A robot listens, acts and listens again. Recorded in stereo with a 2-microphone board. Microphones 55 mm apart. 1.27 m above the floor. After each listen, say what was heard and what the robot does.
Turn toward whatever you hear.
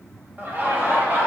The laughter: about 40° right or 140° right. Turn 40° right.
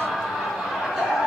So it is at 15° right. Turn 15° right.
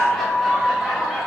Facing the laughter, 2 to 4 m away.